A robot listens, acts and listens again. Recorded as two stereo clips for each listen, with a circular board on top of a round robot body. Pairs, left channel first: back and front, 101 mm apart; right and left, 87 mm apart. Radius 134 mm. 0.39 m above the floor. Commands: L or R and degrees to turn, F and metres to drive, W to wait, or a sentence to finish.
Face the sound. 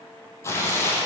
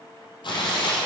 R115
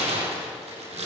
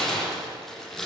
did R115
Found it: tearing paper, straight ahead, over 4 m away.